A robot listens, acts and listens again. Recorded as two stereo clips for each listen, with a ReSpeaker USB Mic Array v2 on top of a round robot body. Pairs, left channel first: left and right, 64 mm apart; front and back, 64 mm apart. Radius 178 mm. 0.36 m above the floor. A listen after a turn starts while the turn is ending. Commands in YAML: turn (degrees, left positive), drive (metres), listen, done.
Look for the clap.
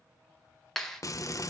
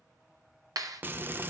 turn: 175
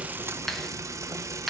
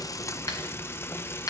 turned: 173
listen: true
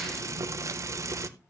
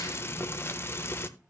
listen: true
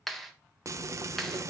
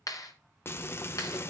done: "Facing the clap, 1 to 2 m away."